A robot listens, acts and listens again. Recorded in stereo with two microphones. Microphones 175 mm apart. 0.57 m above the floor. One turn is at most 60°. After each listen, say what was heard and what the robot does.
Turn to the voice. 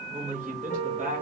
The man speaking: about 45° right or 135° right. Turn 45° right.
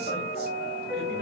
Keep listening.
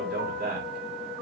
So it is at 80° right. Turn 60° right.
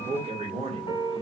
The man speaking is now 45° right. Turn 45° right.
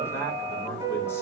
The man speaking is now 15° left. Turn 15° left.
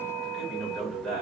Facing the man speaking.